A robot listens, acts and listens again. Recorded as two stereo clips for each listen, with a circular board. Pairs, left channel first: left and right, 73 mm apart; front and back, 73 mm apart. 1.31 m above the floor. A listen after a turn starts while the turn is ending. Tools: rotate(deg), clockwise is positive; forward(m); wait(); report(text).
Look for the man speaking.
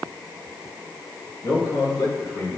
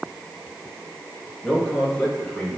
rotate(-70)
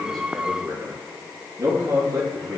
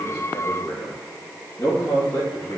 rotate(45)
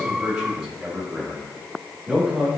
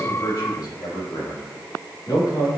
report("Found it: a man speaking, straight ahead.")